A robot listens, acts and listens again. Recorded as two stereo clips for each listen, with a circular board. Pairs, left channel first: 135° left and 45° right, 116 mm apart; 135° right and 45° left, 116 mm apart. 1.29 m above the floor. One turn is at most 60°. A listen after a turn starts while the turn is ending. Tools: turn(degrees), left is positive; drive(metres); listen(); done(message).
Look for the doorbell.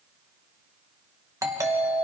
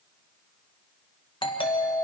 turn(degrees=-60)
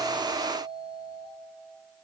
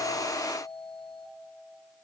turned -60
turn(degrees=-50)
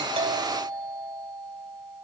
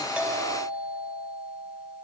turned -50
turn(degrees=10)
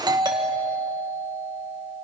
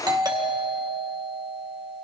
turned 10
done("Facing the doorbell.")